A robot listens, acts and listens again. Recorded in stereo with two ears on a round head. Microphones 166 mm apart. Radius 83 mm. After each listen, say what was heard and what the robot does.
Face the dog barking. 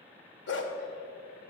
The dog barking: about 65° left or 115° left. Turn 65° left.
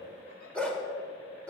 Facing the dog barking.